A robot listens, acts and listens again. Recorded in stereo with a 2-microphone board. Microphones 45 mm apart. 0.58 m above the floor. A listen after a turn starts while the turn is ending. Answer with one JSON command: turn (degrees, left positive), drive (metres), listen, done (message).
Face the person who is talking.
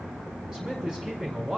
{"turn": -15}
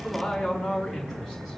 {"done": "Found it: a man speaking, straight ahead, over 4 m away."}